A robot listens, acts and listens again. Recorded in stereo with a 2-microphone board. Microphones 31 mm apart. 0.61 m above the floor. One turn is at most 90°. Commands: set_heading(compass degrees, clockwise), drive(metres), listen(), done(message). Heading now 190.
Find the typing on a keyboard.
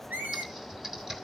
set_heading(205)
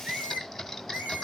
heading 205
done("Found it: typing on a keyboard, straight ahead, 1 to 2 m away.")